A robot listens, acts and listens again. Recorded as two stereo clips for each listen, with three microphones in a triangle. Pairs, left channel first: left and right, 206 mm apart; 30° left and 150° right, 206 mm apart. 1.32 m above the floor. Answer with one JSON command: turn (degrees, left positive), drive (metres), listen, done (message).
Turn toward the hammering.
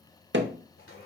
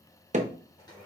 {"turn": -100}
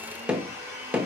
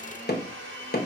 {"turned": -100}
{"done": "Found it: hammering, straight ahead, under 1 m away."}